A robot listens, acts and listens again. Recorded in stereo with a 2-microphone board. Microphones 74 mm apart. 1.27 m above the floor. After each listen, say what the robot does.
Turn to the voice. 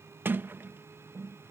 Keep listening.
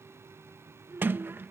Turn 35° right.
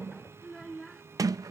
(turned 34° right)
Found it: a child speaking, straight ahead.